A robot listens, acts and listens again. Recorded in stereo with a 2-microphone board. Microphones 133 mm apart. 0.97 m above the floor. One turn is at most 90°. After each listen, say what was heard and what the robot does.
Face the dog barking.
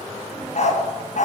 The dog barking: about 70° left or 110° left. Turn 70° left.
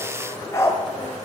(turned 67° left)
So it is at 20° left. Turn 20° left.
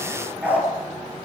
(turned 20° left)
The dog barking is now 15° right. Turn 15° right.
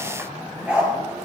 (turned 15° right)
Found it: a dog barking, straight ahead, over 4 m away.